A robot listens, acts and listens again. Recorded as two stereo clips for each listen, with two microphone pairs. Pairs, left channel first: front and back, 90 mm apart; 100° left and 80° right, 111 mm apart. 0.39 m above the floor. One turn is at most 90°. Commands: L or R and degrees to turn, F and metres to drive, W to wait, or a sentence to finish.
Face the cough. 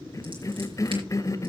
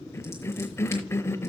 L40
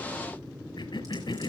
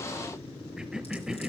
Found it: a cough, straight ahead, 1 to 2 m away.